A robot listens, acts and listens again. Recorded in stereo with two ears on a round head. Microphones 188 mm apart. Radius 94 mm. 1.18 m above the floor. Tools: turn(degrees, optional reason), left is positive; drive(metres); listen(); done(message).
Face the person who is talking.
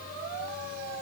listen()
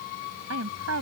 turn(degrees=-90)
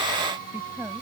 listen()
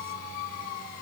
listen()
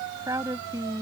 turn(degrees=-20, reason="The woman speaking is now 20° right.")
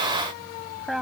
done("Found it: a woman speaking, straight ahead.")